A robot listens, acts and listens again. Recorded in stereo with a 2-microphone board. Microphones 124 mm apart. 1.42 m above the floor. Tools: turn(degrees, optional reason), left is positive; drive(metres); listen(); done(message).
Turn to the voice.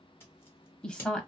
turn(degrees=30)
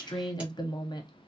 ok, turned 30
turn(degrees=145, reason="So it is at 145° left.")
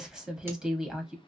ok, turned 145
done("Found it: a woman speaking, straight ahead, under 1 m away.")